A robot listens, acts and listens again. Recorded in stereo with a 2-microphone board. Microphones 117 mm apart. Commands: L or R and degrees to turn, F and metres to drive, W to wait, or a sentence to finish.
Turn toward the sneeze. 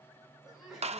R30
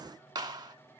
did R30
W
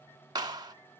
I heard a sneeze, but can't make it out now. It was about 25° left or 145° right.